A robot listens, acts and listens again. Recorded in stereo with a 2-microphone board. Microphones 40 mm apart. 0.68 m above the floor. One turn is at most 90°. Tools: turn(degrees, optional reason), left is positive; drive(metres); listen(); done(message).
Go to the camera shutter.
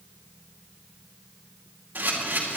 turn(degrees=-55, reason="The camera shutter: about 55° right or 125° right.")
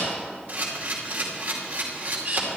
turn(degrees=-55, reason="So it is at 55° right.")
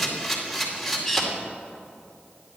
drive(metres=1.0)
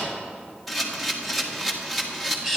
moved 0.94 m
drive(metres=1.0)
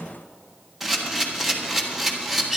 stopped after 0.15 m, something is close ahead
done("I am next to the camera shutter.")